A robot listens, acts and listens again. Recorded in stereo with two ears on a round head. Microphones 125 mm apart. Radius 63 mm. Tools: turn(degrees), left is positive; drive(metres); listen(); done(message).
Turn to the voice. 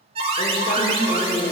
turn(degrees=90)
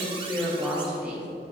turn(degrees=-10)
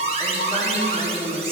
done("Facing the woman speaking.")